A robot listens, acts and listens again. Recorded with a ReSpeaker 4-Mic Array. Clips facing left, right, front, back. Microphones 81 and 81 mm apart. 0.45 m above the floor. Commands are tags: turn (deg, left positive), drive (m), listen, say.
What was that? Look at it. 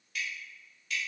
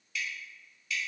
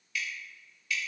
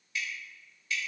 <turn deg="125"/>
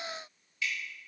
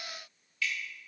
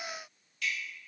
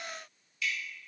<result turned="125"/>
<turn deg="25"/>
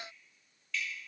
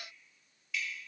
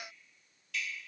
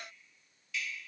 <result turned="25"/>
<turn deg="-10"/>
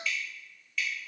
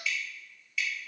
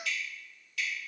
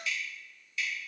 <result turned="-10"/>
<say>Facing the dripping, 1 to 2 m away.</say>